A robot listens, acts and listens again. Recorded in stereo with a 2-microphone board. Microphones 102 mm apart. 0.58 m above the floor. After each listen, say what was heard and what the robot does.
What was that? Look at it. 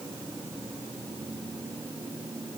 Keep listening.
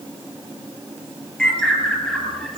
Turn 30° left.
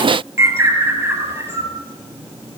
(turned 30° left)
So it is at 25° right. Turn 25° right.
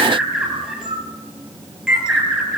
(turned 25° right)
The bird is now 10° right. Turn 10° right.
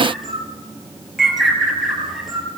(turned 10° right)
Found it: a bird, straight ahead.